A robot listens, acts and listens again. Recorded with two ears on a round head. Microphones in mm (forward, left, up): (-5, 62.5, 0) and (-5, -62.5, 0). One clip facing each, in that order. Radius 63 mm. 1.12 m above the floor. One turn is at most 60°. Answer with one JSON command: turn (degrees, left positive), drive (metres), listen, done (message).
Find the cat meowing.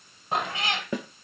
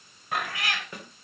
{"turn": 20}
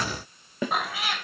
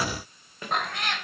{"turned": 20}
{"done": "Facing the cat meowing."}